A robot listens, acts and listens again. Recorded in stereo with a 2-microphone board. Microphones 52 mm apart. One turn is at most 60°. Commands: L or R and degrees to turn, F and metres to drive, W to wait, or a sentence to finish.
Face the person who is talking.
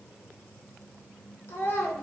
L55
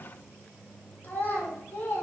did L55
L50
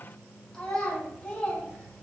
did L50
L20
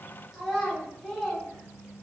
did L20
Facing the child speaking.